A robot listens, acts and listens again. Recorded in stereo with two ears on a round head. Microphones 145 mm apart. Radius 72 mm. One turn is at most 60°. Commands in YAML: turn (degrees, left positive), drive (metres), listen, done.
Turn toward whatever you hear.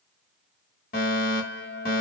turn: 55
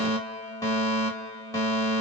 turn: 20
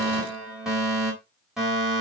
done: "Facing the fire alarm, 2 to 4 m away."